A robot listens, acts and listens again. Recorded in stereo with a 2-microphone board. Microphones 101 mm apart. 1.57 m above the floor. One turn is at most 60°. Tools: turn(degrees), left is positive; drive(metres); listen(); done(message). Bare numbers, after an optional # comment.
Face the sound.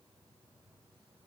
listen()
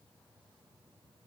listen()
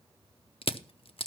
# The crushing: about 65° left or 115° left.
turn(60)
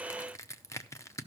# So it is at 30° left.
turn(30)
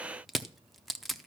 done("Found it: crushing, straight ahead.")